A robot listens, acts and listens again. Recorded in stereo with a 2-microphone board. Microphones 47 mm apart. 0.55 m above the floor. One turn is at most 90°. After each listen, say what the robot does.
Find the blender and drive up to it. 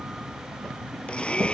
Turn 25° left.
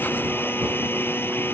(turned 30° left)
Turn 90° left.
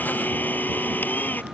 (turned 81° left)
Turn 45° left.
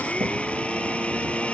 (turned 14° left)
Turn 30° left.
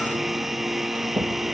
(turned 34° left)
Drive 1.0 m forward.
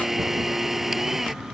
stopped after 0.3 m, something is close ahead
Something is in my way. I am facing the blender but have not reached it.